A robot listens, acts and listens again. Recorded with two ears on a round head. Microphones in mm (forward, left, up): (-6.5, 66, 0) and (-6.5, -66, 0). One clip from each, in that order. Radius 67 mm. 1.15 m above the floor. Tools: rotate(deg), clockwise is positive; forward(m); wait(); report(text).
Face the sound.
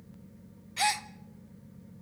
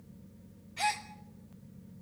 rotate(-40)
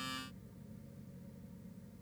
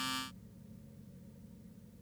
wait()
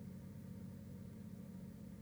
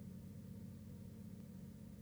report("I heard a gasp, but can't make it out now. It was about straight ahead or 100° left.")